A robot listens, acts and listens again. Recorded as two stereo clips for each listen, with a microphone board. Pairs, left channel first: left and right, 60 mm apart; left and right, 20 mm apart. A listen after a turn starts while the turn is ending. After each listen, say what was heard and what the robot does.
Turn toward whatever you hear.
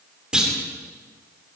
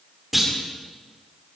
Turn 30° right.
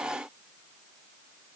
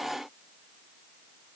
Keep listening.
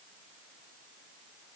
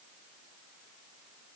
I heard a clunk, but can't make it out now. It was about 20° left or 140° right.